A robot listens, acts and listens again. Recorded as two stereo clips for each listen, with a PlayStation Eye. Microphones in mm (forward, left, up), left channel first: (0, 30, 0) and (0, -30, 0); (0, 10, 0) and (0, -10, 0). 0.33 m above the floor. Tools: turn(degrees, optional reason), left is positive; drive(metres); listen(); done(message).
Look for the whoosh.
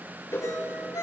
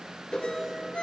turn(degrees=50, reason="The whoosh: about 50° left or 130° left.")
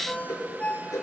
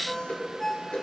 turn(degrees=80, reason="So it is at 80° left.")
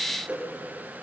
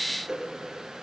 turn(degrees=-20, reason="The whoosh is now 20° right.")
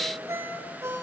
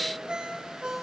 listen()
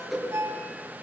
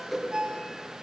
done("Facing the whoosh, over 4 m away.")